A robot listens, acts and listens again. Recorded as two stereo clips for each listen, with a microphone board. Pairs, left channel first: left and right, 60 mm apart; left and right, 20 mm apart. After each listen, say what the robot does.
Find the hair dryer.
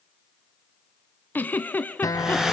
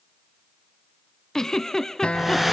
Turn 30° right.
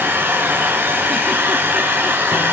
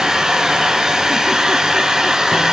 Turn 140° right.
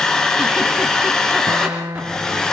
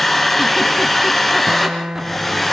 Turn 10° left.
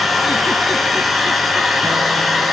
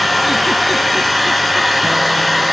Found it: a hair dryer, straight ahead.